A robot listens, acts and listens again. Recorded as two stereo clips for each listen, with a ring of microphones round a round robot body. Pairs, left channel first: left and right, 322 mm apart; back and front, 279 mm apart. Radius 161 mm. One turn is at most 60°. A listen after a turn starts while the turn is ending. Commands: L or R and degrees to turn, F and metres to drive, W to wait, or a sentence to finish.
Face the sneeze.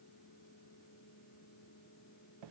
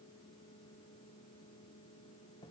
W
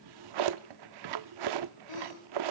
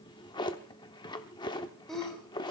L60
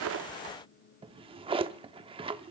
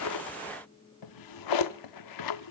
L30
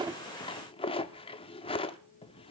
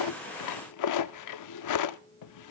Facing where the sneeze came from. I can't hear it now.